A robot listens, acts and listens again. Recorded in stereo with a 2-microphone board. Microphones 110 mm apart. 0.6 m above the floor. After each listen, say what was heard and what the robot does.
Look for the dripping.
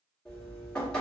Turn 30° left.
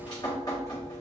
So it is at 140° left. Turn 140° left.
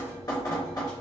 The dripping is now 40° left. Turn 40° left.
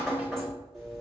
Found it: dripping, straight ahead, 1 to 2 m away.